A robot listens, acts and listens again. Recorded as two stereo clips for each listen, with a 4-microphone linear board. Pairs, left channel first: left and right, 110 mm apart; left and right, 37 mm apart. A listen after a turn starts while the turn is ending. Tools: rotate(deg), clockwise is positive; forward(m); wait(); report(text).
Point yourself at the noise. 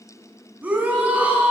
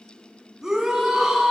rotate(30)
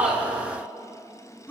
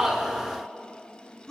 rotate(-15)
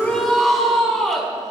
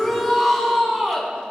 report("Found it: a shout, straight ahead.")